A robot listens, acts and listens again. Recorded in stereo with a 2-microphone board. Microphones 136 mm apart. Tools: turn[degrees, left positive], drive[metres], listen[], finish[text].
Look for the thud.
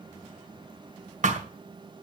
Thought: The thud: about 70° right or 110° right.
Action: turn[-70]
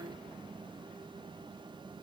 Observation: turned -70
Action: listen[]
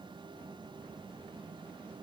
Action: finish[I heard a thud, but can't make it out now. It was about straight ahead or 40° right.]